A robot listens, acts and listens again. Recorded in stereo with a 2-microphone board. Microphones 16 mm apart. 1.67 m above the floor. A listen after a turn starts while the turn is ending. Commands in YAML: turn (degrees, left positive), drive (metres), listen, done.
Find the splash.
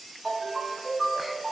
listen: true
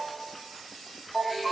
listen: true
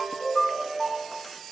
done: "I can't make out a splash to turn to."